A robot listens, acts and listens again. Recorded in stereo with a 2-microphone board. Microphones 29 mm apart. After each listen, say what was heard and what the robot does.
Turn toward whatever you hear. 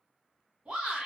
The shout: about 45° right or 135° right. Turn 45° right.
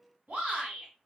So it is at 75° right. Turn 75° right.
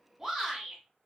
Facing the shout, 1 to 2 m away.